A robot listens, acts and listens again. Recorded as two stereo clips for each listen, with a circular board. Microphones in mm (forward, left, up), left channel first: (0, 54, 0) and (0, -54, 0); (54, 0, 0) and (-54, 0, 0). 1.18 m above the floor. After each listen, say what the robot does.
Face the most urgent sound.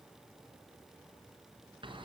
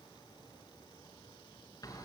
Keep listening.
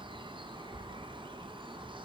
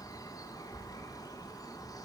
Keep listening.
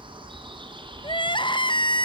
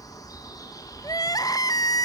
Turn 50° left.
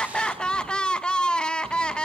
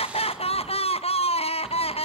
Turn 10° left.
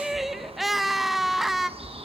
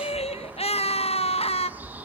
Facing the crying.